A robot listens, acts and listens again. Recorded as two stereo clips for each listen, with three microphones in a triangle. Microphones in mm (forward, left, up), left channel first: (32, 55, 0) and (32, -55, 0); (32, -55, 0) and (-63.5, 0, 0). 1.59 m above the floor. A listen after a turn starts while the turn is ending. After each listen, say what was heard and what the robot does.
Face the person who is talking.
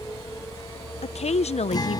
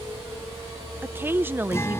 The woman speaking: 80° left. Turn 80° left.
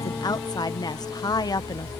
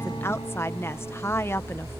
The woman speaking is now 35° left. Turn 35° left.
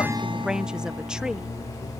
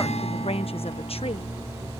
Found it: a woman speaking, straight ahead.